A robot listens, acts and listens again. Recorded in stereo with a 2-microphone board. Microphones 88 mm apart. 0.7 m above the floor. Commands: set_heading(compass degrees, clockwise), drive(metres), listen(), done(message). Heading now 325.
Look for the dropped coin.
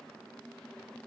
listen()
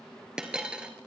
set_heading(355)
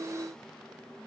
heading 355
listen()
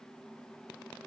done("I heard a dropped coin, but can't make it out now. It was about 20° left or 140° right.")